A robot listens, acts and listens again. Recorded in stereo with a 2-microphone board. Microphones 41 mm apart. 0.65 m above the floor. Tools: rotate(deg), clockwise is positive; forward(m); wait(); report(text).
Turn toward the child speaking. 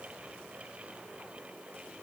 wait()
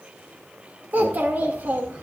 rotate(60)
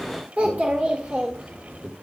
rotate(25)
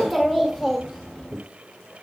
report("Found it: a child speaking, straight ahead, 1 to 2 m away.")